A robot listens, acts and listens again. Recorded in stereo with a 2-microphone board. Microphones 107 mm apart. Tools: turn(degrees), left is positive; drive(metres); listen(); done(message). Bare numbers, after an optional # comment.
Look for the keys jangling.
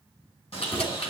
# The keys jangling: about 65° left or 115° left.
turn(65)
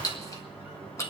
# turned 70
# So it is at 30° left.
turn(30)
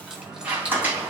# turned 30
# The keys jangling is now 10° right.
turn(-10)
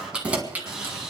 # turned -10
# The keys jangling is now 15° right.
turn(-15)
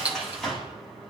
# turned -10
# The keys jangling is now 10° right.
turn(-10)
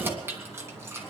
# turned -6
# The keys jangling is now 25° right.
turn(-25)
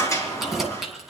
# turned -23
done("Found it: keys jangling, straight ahead.")